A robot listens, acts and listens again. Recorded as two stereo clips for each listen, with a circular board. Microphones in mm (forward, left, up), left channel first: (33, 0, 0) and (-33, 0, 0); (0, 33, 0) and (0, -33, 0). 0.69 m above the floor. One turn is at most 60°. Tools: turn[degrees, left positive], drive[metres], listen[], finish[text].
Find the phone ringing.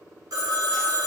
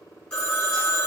Thought: The phone ringing: 165° left.
Action: turn[60]
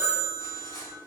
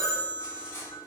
Thought: The phone ringing is now 110° left.
Action: turn[60]
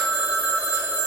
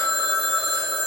Thought: The phone ringing is now 60° left.
Action: turn[60]
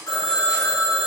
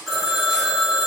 Action: finish[Facing the phone ringing, under 1 m away.]